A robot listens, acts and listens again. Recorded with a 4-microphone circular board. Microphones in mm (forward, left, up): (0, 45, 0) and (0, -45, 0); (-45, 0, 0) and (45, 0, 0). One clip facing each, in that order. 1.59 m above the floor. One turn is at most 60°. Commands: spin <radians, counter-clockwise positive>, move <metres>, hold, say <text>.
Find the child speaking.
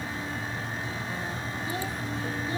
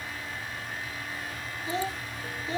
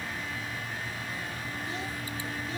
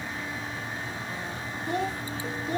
spin -0.44
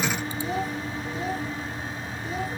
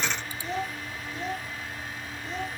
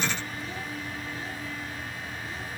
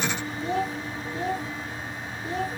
say Facing the child speaking.